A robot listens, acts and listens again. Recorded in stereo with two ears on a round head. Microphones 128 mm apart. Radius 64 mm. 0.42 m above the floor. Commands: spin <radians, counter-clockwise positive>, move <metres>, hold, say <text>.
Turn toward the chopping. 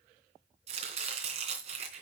spin -0.79
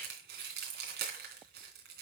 spin -1.48
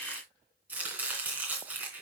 spin -0.17
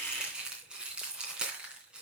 say Facing the chopping, 2 to 4 m away.